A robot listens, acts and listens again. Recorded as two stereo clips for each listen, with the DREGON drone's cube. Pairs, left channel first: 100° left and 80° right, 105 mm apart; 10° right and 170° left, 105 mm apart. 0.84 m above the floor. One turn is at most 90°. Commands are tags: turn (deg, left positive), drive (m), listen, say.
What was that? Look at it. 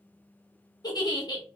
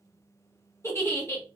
<turn deg="50"/>
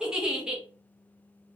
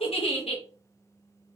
<say>Facing the giggle.</say>